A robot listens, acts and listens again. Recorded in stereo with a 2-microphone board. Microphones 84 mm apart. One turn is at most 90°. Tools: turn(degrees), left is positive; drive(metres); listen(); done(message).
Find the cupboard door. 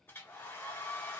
listen()
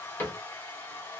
turn(degrees=25)
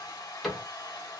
done("Facing the cupboard door.")